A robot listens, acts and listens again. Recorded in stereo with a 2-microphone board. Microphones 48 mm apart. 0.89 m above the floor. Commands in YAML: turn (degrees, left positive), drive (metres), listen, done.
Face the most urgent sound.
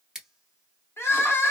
turn: 60
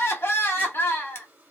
turn: 55
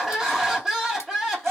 turn: -10
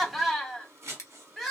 done: "Found it: crying, straight ahead."